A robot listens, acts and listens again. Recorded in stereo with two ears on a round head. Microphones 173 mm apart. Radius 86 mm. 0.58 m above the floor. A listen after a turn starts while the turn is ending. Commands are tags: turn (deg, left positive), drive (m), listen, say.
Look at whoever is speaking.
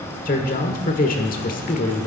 <turn deg="45"/>
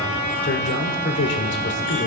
<turn deg="85"/>
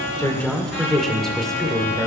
<say>Found it: a man speaking, straight ahead.</say>